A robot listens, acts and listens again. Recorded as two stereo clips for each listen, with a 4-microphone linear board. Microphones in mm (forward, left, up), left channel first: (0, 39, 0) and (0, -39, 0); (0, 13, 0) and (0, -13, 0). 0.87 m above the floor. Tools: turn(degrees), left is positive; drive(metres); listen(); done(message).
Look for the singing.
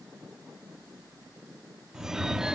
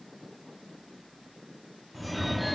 listen()
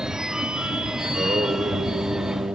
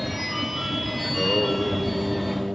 turn(degrees=-65)
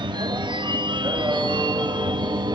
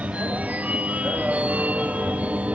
turn(degrees=-40)
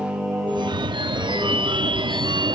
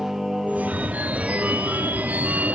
turn(degrees=-15)
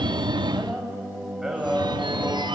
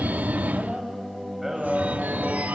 done("Found it: singing, straight ahead.")